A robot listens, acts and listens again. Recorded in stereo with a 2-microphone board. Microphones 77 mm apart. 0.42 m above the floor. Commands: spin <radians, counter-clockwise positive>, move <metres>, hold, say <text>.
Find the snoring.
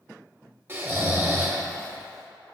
spin -0.52
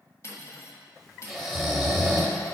say Found it: snoring, straight ahead.